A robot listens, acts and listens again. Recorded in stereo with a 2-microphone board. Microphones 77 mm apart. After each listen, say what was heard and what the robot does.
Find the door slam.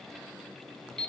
Keep listening.
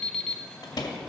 The door slam: about 55° left or 125° left. Turn 55° left.
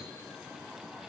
Keep listening.
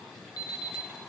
I heard a door slam, but can't make it out now. It was about straight ahead or 70° left.